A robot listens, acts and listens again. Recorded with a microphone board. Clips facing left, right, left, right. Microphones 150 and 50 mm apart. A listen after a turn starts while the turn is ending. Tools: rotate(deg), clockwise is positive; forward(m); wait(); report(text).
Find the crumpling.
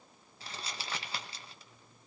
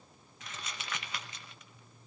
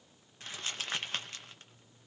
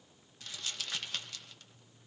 rotate(-35)
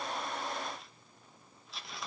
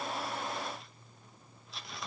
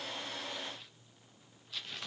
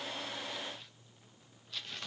report("Found it: crumpling, straight ahead, under 1 m away.")